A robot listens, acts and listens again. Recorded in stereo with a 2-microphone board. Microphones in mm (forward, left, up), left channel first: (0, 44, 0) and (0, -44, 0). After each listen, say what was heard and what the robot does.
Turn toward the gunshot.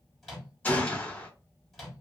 The gunshot: about 15° left or 165° left. Turn 15° left.
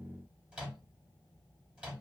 Keep listening.
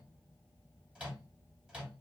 I heard a gunshot, but can't make it out now. It was about straight ahead or 150° left.